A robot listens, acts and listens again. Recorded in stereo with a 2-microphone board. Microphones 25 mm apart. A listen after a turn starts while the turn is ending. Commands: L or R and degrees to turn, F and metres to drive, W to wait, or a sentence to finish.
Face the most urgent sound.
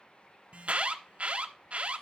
R55
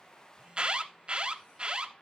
R45
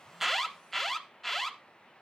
L10
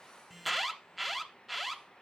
Found it: an alarm, straight ahead.